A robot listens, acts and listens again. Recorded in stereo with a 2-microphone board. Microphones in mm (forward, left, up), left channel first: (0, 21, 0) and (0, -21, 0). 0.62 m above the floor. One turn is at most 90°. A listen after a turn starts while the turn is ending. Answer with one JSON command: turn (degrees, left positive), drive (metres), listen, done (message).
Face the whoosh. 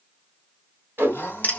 {"turn": -60}
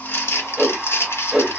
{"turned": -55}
{"turn": -10}
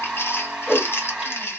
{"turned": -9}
{"done": "Found it: a whoosh, straight ahead, 1 to 2 m away."}